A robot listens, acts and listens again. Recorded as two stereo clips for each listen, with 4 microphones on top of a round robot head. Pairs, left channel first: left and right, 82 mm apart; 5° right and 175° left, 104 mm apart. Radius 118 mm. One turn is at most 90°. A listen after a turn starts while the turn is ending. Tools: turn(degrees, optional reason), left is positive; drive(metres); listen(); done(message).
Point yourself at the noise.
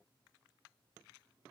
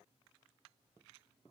listen()
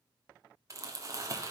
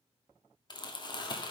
turn(degrees=-45, reason="The crumpling: 45° right.")
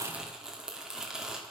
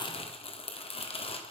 turn(degrees=-10, reason="The crumpling is now 10° right.")
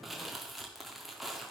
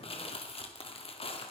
done("Found it: crumpling, straight ahead.")